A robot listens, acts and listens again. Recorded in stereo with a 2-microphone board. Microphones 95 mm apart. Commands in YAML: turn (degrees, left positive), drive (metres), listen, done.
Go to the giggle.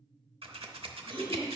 turn: 25
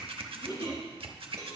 turn: 130
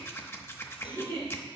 turn: 30
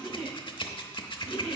drive: 1.0
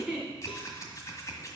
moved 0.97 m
turn: -10
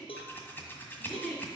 drive: 1.0
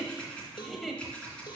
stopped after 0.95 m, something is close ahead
done: "Arrived at the giggle, straight ahead."